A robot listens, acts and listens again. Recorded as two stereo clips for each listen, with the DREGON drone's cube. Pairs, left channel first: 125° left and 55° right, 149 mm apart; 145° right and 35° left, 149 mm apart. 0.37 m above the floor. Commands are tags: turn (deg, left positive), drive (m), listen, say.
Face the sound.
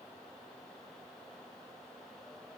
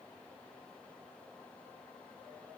<listen/>
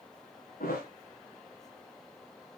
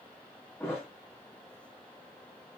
<turn deg="140"/>
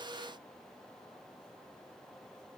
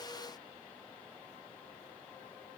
<say>I heard a thud from this way, but can't make it out now.</say>